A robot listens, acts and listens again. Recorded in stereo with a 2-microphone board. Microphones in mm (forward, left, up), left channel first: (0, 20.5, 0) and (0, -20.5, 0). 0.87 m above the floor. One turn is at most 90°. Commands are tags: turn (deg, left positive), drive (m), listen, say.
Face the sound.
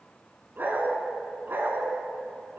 <turn deg="-60"/>
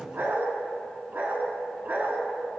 <turn deg="-45"/>
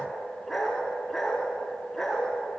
<say>Found it: a dog barking, straight ahead.</say>